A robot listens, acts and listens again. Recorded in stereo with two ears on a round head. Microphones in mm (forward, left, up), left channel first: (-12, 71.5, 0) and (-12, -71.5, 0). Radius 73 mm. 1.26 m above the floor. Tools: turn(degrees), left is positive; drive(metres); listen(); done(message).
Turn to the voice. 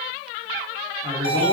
turn(degrees=-25)
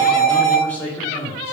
turn(degrees=15)
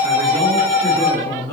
turn(degrees=15)
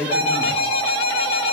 done("Found it: a man speaking, straight ahead, 2 to 4 m away.")